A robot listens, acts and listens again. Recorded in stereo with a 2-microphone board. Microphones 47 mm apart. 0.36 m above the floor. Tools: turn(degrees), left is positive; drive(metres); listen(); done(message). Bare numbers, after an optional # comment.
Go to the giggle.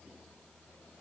listen()
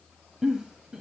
turn(-30)
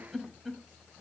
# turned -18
drive(1.0)
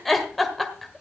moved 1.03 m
drive(1.0)
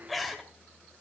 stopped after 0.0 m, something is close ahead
done("Arrived at the giggle, straight ahead.")